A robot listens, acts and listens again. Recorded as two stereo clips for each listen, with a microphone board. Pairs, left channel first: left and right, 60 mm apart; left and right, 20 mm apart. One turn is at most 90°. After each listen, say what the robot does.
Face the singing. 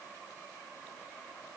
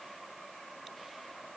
Keep listening.
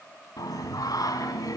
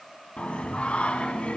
Turn 90° left.
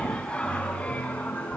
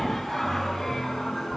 Turn 20° left.
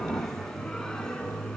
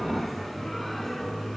Turn 10° left.
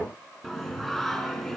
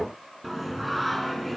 Facing the singing, over 4 m away.